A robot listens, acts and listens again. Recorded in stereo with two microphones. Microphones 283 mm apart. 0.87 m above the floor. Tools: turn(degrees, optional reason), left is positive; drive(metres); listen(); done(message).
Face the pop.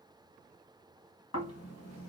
listen()
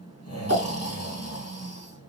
turn(degrees=65, reason="The pop: about 65° left or 115° left.")
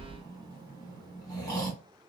listen()
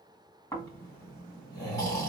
done("I heard a pop, but can't make it out now. It was about straight ahead or 50° left.")